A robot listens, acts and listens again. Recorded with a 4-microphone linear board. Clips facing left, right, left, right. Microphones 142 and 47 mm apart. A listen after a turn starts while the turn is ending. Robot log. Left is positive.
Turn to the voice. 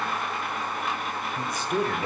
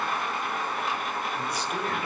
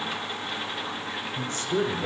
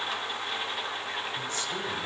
note: The woman speaking: about 45° left or 135° left.
cmd yaw +45
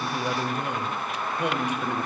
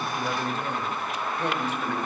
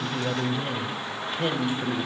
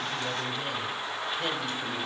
note: So it is at 15° left.
cmd yaw +15
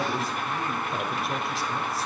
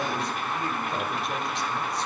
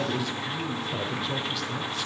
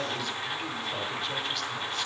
end: Facing the woman speaking.